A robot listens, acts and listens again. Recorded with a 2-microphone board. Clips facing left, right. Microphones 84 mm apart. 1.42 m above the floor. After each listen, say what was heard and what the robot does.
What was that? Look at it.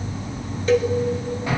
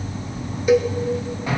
Turn 30° right.
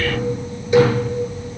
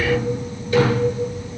So it is at 20° left. Turn 20° left.
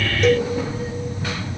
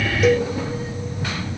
Found it: a cowbell, straight ahead, 1 to 2 m away.